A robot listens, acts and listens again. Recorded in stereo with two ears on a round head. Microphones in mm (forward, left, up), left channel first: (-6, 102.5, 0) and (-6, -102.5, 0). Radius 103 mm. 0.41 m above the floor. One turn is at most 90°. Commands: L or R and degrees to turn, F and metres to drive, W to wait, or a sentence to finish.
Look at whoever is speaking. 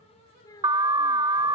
L15
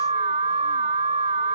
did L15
W
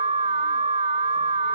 W
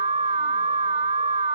I heard a child speaking, but can't make it out now. It was about straight ahead or 150° left.